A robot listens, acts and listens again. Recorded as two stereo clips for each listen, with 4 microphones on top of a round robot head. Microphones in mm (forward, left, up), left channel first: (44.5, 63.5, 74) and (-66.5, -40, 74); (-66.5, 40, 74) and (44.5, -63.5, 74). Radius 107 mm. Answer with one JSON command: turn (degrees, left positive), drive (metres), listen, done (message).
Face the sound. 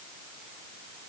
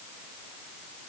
{"listen": true}
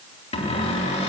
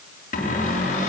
{"turn": 95}
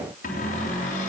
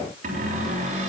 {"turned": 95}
{"done": "Facing the cupboard door."}